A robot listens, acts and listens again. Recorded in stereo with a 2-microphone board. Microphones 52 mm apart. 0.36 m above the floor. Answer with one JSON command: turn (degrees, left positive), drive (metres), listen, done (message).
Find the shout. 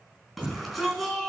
{"turn": -30}
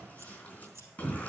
{"turn": 25}
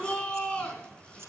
{"turn": 15}
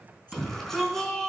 {"done": "Facing the shout."}